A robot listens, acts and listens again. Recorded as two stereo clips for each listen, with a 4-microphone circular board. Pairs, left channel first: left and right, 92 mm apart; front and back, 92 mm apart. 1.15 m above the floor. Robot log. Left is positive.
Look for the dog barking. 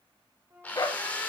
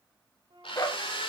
note: The dog barking: 45° left.
cmd yaw +45
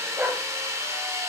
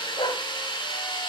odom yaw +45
note: The dog barking is now 20° right.
cmd yaw -20
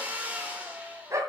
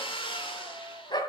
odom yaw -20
note: The dog barking is now 35° right.
cmd yaw -35
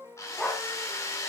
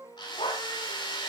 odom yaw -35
note: The dog barking is now 10° left.
cmd yaw +10
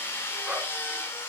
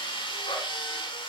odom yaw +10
cmd idle
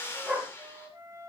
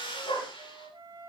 note: The dog barking is now 10° right.
cmd yaw -10
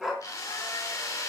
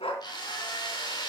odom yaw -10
end: Found it: a dog barking, straight ahead.